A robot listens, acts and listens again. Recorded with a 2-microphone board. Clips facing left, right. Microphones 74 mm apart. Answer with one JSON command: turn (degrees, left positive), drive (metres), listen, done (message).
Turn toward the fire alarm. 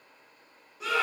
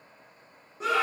{"listen": true}
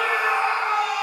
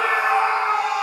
{"listen": true}
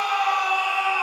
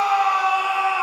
{"done": "I can't make out a fire alarm to turn to."}